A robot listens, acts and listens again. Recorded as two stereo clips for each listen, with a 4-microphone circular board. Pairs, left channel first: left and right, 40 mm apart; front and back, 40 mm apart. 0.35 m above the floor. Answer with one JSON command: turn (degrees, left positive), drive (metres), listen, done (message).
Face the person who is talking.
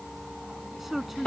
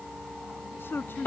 {"done": "Found it: a man speaking, straight ahead."}